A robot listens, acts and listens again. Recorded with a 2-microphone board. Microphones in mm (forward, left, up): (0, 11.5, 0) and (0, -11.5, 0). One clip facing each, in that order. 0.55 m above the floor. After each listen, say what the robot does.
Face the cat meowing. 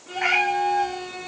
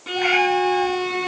Turn 20° left.
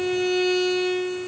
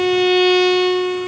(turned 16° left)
Keep listening.
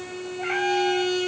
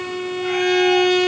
Keep listening.
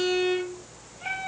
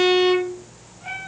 Turn 40° left.
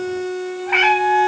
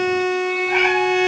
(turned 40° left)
Turn 100° left.
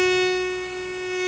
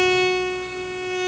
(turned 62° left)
Turn 35° left.
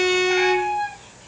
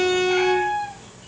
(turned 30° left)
Facing the cat meowing.